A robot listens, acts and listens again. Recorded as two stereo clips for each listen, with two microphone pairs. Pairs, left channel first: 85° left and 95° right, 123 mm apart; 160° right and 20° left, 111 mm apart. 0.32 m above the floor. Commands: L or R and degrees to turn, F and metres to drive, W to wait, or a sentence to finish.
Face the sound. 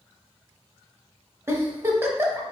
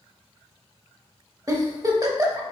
R30
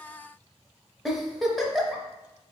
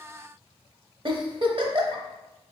Found it: a giggle, straight ahead, under 1 m away.